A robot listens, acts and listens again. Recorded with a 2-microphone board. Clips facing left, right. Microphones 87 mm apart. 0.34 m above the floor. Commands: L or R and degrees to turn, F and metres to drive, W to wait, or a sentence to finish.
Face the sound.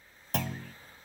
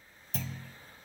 L70
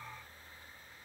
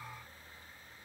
W
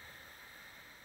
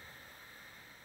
I heard a clunk, but can't make it out now. It was about straight ahead or 40° left.